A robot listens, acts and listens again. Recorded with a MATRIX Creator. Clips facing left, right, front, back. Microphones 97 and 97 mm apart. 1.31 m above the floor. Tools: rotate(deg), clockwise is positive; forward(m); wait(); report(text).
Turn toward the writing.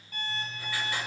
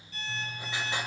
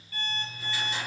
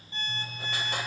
rotate(155)
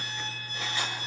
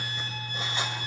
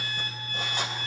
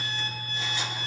rotate(30)
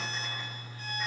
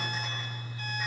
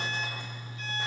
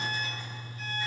report("Facing the writing, 2 to 4 m away.")